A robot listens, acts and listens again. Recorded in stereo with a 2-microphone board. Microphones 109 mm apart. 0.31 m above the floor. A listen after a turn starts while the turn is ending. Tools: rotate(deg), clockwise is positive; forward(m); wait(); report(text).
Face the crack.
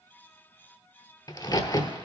rotate(-40)
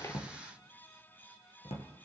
wait()
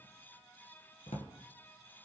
report("I heard a crack, but can't make it out now. It was about straight ahead or 100° left.")